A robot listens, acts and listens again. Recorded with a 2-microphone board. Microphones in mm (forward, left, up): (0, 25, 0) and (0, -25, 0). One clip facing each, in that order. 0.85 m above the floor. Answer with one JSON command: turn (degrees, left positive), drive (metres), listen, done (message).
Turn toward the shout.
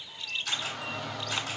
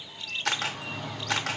{"turn": 65}
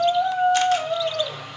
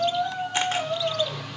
{"turn": 40}
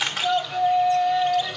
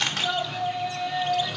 {"turn": 10}
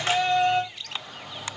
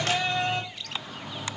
{"done": "Facing the shout, 1 to 2 m away."}